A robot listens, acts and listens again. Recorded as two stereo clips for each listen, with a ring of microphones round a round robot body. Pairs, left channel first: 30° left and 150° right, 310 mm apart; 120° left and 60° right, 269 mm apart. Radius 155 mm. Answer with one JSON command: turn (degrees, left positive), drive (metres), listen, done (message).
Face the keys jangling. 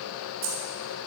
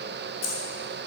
{"turn": 165}
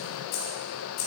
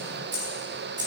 {"turn": -10}
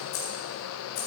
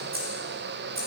{"done": "Found it: keys jangling, straight ahead."}